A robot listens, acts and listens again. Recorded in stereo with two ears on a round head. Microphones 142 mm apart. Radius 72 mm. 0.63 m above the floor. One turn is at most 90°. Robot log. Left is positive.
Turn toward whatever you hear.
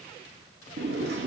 cmd yaw -90
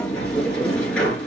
end: Found it: a sliding door, straight ahead, 2 to 4 m away.